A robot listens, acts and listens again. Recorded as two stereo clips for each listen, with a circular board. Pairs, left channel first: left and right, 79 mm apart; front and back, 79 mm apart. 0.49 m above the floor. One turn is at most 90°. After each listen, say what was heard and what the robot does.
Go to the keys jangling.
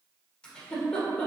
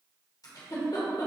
Keep listening.
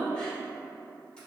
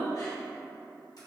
Keep listening.
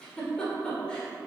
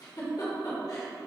I can't make out keys jangling to turn to.